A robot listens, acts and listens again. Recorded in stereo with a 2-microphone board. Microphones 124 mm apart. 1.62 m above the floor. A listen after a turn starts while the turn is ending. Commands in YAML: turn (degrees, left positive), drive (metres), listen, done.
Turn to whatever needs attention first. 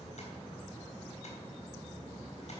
listen: true
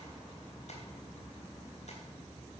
listen: true
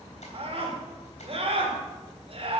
turn: -50
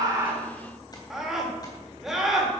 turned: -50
done: "Facing the scream, 2 to 4 m away."